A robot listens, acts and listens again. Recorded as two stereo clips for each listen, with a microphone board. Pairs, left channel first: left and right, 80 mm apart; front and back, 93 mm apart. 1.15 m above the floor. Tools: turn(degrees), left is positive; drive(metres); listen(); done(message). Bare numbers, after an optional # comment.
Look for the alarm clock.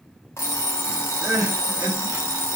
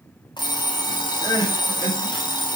# The alarm clock: 35° left.
turn(35)
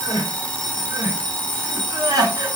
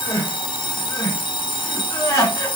# The alarm clock is now 15° left.
turn(15)
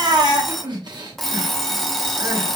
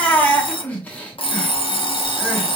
done("Facing the alarm clock, under 1 m away.")